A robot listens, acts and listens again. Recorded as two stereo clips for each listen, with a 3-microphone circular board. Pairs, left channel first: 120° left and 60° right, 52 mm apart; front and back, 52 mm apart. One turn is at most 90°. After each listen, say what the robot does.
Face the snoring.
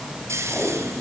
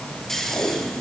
Turn 80° right.
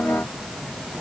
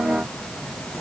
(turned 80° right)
Keep listening.
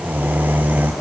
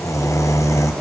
Facing the snoring.